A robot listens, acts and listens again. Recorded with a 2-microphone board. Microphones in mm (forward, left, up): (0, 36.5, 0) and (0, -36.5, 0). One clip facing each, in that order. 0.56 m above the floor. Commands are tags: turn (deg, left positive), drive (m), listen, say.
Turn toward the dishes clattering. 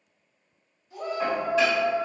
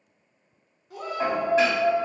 <turn deg="-30"/>
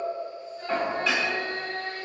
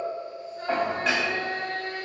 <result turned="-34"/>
<turn deg="-115"/>
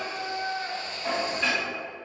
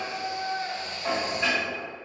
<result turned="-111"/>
<say>Found it: dishes clattering, straight ahead, 1 to 2 m away.</say>